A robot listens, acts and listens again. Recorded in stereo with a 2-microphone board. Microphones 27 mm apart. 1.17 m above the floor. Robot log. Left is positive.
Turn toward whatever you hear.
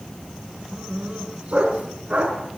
note: The dog barking: about 50° right or 130° right.
cmd yaw -50
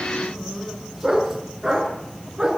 note: So it is at 10° right.
cmd yaw -10
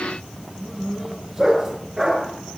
end: Found it: a dog barking, straight ahead.